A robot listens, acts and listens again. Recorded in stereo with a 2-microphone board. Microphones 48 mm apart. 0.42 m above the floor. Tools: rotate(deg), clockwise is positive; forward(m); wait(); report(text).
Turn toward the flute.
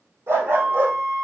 rotate(90)
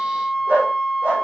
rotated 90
report("Facing the flute, 2 to 4 m away.")